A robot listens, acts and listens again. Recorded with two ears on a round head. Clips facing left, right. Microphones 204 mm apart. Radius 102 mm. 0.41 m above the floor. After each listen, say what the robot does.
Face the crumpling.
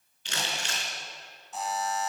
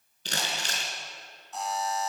Turn 35° right.
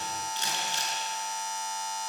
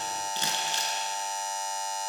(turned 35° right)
Turn 110° right.
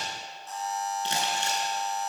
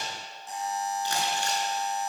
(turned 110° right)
Turn 20° left.
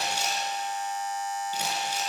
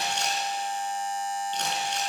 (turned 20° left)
Found it: crumpling, straight ahead.